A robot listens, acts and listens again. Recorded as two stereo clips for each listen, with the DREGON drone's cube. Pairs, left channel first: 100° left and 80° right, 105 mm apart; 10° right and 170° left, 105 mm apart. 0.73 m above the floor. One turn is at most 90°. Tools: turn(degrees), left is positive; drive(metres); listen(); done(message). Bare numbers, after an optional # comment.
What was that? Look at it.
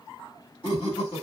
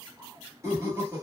# The laughter: 110° left.
turn(90)
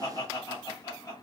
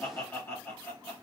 # The laughter is now 50° left.
turn(50)
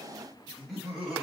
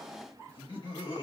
# The laughter is now 10° left.
turn(10)
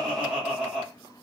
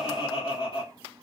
done("Facing the laughter.")